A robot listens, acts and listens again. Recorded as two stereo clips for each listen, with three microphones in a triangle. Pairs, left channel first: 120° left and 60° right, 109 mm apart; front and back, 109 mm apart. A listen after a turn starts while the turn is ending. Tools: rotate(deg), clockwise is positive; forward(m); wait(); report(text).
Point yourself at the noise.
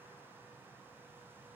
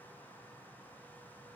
wait()
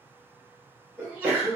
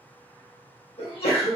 rotate(-15)
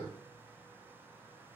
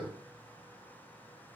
report("I heard a sneeze from this way, but can't make it out now.")